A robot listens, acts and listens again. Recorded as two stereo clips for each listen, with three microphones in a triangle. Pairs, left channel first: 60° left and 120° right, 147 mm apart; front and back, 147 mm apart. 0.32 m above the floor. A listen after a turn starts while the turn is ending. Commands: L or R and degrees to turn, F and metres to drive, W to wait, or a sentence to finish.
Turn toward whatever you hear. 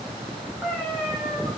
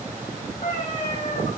R35
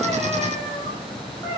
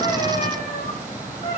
Found it: a cat meowing, straight ahead.